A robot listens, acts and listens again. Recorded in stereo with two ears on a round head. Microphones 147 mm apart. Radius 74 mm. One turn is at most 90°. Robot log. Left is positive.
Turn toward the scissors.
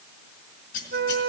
note: The scissors: about 55° left or 125° left.
cmd yaw +55
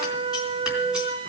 cmd idle
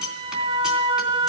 end: Facing the scissors.